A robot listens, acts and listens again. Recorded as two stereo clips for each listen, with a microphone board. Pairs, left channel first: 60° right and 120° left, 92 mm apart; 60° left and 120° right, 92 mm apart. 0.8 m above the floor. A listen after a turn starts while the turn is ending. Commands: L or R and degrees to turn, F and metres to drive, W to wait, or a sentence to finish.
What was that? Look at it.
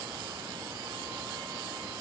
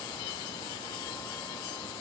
W
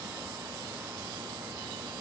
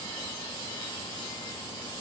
W
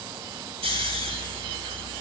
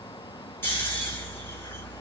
L125
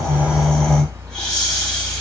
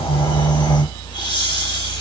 L20
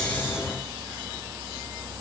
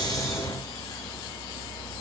W
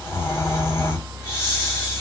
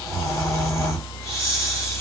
Found it: snoring, straight ahead.